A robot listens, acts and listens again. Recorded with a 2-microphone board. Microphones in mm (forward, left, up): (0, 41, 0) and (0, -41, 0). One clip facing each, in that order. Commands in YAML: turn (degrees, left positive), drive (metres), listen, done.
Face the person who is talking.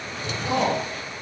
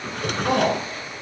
turn: -35
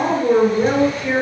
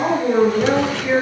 done: "Facing the woman speaking, over 4 m away."